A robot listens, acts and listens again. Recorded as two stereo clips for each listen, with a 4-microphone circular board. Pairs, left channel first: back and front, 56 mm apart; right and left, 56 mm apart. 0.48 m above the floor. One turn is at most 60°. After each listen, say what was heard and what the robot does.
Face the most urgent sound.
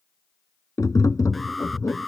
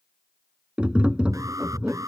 The alarm: 90° left. Turn 60° left.
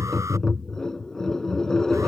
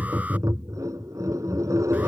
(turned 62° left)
Nothing new. It was at 30° left. Turn 30° left.
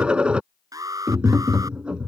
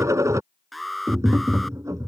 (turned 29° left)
Found it: an alarm, straight ahead.